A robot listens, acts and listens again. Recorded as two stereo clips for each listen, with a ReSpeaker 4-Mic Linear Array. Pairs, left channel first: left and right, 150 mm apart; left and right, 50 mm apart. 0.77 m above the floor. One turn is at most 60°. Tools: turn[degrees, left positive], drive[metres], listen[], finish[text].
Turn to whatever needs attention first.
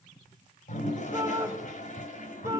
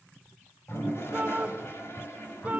Thought: The shout: about 20° right or 160° right.
Action: turn[-20]
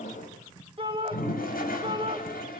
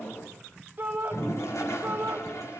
Thought: So it is at 140° right.
Action: turn[-60]
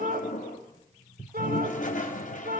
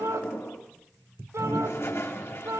Thought: The shout is now 95° right.
Action: turn[-60]
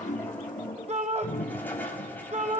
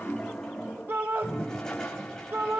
Thought: The shout is now 50° right.
Action: turn[-50]
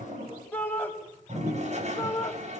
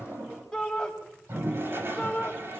Thought: The shout is now 15° left.
Action: turn[15]
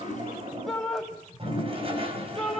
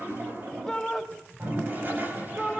Action: finish[Found it: a shout, straight ahead.]